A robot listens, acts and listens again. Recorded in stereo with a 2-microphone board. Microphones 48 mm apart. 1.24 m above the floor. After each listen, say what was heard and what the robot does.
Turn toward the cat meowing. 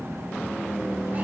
Keep listening.
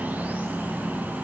Keep listening.
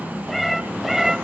Turn 30° right.
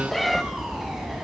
Turn 30° right.
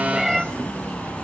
Turn 30° right.
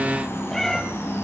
Facing the cat meowing.